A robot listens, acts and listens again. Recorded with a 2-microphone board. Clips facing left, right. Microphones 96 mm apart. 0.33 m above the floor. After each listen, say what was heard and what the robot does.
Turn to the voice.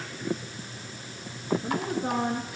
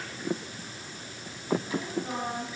The woman speaking: about 70° left or 110° left. Turn 70° left.
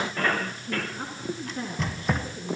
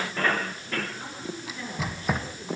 So it is at 45° left. Turn 45° left.
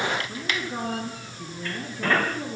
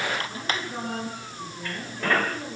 The woman speaking is now 15° left. Turn 15° left.
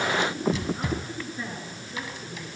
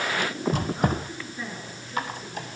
Facing the woman speaking, over 4 m away.